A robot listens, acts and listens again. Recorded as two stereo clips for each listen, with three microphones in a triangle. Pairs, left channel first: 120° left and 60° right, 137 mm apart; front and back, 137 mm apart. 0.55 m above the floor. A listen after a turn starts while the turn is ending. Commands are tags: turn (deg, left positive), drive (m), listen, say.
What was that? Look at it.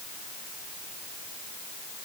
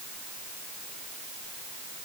<listen/>
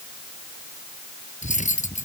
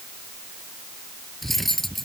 <turn deg="90"/>
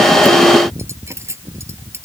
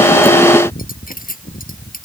<turn deg="10"/>
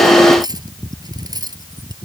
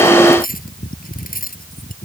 <say>Found it: cutlery clinking, straight ahead.</say>